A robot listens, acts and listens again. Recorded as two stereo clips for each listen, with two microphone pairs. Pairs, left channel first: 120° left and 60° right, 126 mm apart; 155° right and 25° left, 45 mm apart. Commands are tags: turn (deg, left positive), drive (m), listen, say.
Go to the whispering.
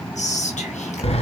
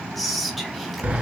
<turn deg="120"/>
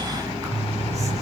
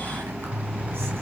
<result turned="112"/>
<listen/>
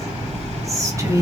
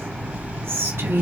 <drive m="1.0"/>
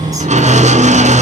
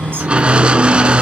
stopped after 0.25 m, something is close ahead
<listen/>
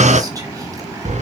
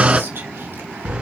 <listen/>
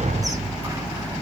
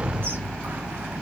<say>I heard whispering from this way, but can't make it out now. I did not reach it.</say>